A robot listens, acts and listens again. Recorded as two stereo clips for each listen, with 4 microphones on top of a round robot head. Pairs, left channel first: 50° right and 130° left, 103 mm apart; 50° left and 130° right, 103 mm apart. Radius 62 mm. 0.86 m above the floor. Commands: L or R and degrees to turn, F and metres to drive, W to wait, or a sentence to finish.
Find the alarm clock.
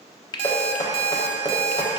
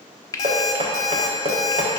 L105
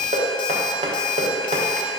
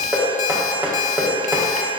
Found it: an alarm clock, straight ahead.